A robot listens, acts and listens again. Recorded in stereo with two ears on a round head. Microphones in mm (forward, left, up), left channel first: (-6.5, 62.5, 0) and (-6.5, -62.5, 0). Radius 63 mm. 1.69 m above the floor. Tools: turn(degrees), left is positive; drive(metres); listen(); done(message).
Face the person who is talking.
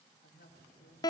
turn(degrees=90)
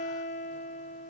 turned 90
listen()
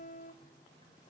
listen()
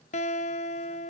done("I heard a woman speaking from this way, but can't make it out now.")